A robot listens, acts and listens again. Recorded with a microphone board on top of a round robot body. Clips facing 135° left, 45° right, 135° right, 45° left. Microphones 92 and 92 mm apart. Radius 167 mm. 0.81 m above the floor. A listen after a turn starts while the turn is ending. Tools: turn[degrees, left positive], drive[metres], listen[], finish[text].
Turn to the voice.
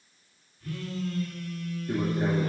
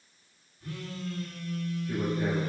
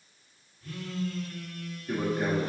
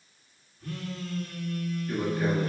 Thought: The man speaking: 165° left.
Action: turn[165]
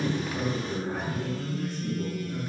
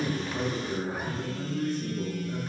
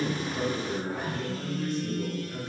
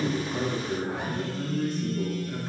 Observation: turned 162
Action: finish[Facing the man speaking, 2 to 4 m away.]